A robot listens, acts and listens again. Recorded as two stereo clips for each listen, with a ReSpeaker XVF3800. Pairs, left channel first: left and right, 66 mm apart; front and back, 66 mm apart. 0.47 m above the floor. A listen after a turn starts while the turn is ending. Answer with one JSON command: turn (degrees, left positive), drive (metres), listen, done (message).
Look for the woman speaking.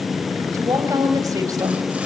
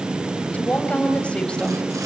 {"turn": -75}
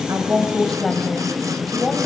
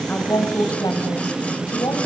{"done": "Found it: a woman speaking, straight ahead, 2 to 4 m away."}